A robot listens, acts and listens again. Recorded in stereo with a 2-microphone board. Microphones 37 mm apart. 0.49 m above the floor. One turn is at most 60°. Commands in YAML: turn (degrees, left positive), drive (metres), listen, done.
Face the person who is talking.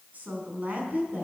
turn: -45
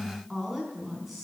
done: "Found it: a woman speaking, straight ahead."